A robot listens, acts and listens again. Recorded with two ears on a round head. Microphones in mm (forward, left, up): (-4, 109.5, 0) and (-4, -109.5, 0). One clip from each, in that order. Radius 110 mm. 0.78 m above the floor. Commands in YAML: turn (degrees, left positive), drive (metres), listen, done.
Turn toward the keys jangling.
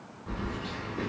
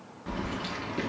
turn: -90
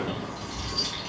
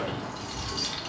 turn: -10
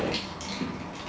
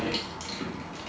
done: "Found it: keys jangling, straight ahead."